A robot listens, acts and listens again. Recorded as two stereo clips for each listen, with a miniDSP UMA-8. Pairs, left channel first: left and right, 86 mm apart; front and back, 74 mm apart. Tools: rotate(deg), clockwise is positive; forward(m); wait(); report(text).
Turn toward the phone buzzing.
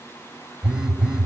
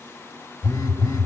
rotate(10)
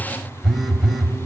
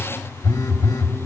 report("Facing the phone buzzing.")